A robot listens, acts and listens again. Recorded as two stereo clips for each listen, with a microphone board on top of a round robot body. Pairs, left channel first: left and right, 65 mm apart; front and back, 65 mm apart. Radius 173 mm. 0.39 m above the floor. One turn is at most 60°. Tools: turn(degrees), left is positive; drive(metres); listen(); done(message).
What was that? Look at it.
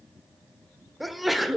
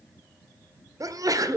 turn(degrees=60)
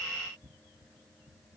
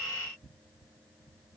turn(degrees=60)
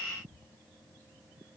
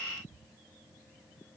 turn(degrees=60)
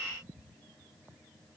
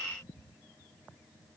done("Facing where the sneeze came from. I can't hear it now.")